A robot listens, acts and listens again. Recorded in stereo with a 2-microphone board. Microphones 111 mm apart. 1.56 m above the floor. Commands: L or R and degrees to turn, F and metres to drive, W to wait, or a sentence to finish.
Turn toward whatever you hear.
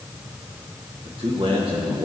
R55
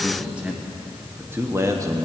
R30
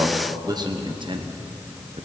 R65
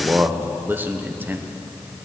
R15
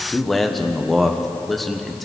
Found it: a man speaking, straight ahead.